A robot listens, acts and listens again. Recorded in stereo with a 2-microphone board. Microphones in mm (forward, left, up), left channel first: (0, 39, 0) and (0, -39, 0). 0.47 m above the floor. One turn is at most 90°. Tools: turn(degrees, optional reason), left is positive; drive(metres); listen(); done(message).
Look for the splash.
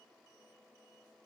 listen()
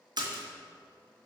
turn(degrees=-70, reason="The splash: about 70° right or 110° right.")
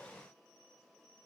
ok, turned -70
listen()
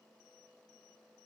done("I heard a splash, but can't make it out now. It was about straight ahead or 40° right.")